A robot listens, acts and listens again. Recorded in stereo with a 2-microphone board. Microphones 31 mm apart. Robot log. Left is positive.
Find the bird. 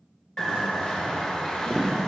note: The bird: about 25° left or 155° left.
cmd yaw +25
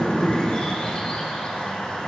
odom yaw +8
note: The bird: about 30° left or 150° left.
cmd yaw +30
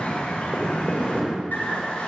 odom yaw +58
note: So it is at 90° left.
cmd yaw +90
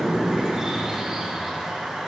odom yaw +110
note: The bird is now 25° right.
cmd yaw -25
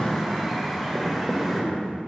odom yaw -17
end: Found it: a bird, straight ahead, 1 to 2 m away.